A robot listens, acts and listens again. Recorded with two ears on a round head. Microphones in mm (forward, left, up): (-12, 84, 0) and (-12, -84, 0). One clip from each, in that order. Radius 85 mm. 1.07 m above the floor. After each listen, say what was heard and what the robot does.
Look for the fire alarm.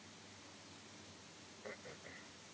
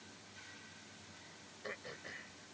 Keep listening.
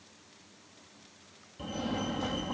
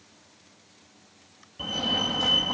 The fire alarm: about 40° right or 140° right. Turn 40° right.
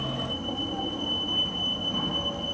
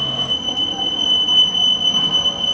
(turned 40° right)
So it is at 95° right. Turn 95° right.
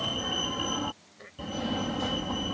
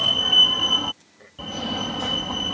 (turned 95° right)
The fire alarm is now 25° right. Turn 25° right.
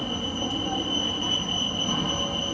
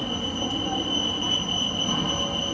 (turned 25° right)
Facing the fire alarm.